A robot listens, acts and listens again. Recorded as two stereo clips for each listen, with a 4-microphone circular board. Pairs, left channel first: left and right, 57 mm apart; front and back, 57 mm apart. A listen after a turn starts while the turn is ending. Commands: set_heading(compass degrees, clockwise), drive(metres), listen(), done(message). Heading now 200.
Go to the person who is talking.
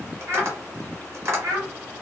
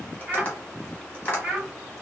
set_heading(300)
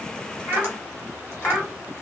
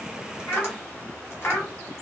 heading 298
drive(1.0)
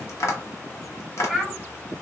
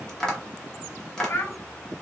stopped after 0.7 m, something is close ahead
done("Arrived at the child speaking, straight ahead.")